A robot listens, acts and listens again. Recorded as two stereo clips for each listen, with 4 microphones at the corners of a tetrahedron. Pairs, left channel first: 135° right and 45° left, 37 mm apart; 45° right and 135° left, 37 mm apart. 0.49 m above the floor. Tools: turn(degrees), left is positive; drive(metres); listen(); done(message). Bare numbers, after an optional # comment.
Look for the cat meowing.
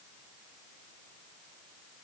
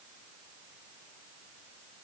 listen()
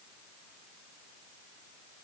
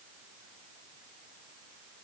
listen()
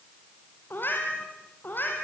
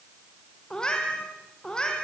# The cat meowing: 115° right.
turn(-115)
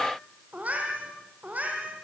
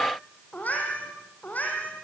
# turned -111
done("Facing the cat meowing, over 4 m away.")